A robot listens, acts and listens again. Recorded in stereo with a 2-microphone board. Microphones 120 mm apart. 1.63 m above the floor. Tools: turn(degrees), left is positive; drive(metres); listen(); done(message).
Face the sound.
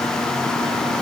listen()
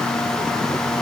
listen()
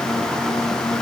done("I can't make out anything to turn to.")